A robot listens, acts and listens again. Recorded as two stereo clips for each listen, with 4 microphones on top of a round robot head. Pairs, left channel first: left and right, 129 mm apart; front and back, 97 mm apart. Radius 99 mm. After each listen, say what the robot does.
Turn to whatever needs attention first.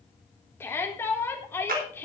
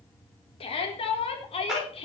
Turn 15° left.
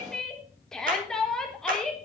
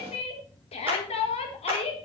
Facing the shout, 2 to 4 m away.